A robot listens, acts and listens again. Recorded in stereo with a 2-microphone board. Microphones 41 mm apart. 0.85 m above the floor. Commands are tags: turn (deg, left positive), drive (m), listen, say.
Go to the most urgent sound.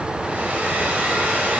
<listen/>
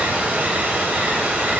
<listen/>
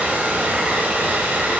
<say>I can't make out anything urgent to turn to.</say>